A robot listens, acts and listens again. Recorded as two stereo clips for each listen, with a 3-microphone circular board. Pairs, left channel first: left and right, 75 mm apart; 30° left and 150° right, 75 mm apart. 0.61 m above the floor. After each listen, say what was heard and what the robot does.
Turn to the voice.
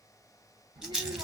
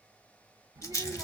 The child speaking: 115° right. Turn 115° right.
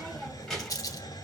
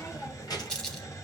Facing the child speaking.